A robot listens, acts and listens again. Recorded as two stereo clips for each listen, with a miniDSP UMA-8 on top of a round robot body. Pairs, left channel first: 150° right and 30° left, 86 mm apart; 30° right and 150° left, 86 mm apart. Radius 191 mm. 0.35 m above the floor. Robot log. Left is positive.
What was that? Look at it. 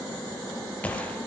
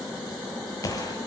note: The gunshot: 75° right.
cmd yaw -75
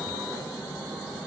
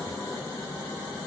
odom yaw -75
end: I heard a gunshot from this way, but can't make it out now.